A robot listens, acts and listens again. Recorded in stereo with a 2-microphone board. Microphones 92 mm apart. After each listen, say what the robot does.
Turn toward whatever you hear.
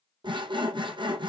Turn 55° right.
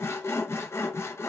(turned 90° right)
Turn 30° left.
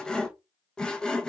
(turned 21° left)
Turn 10° left.
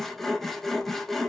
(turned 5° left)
Found it: sawing, straight ahead, under 1 m away.